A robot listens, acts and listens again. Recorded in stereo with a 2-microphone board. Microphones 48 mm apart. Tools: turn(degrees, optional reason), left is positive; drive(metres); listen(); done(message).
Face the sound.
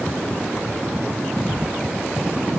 turn(degrees=50, reason="The thud: about 50° left or 130° left.")
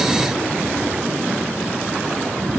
listen()
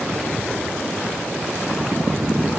done("I heard a thud, but can't make it out now. It was about straight ahead or 80° left.")